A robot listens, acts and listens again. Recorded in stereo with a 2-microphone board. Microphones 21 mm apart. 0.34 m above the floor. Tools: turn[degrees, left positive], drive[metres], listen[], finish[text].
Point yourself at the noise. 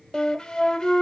Thought: The flute: about 30° left or 150° left.
Action: turn[30]
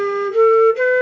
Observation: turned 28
Thought: So it is at 10° left.
Action: turn[10]
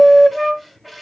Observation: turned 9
Action: finish[Facing the flute, under 1 m away.]